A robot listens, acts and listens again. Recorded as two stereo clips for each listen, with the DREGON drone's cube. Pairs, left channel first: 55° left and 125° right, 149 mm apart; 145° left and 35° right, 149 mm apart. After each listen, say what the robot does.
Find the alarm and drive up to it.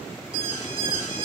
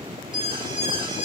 Turn 20° left.
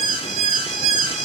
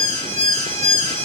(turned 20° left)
Drive 1.0 m forward.
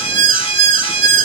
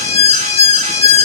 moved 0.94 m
Drive 1.0 m forward.
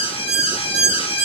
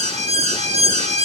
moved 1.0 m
Drive 1.0 m forward.
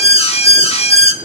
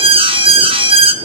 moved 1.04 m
Turn 15° left.
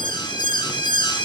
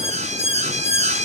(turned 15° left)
Drive 1.0 m forward.
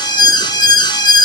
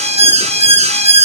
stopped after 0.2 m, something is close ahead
Arrived at the alarm, straight ahead.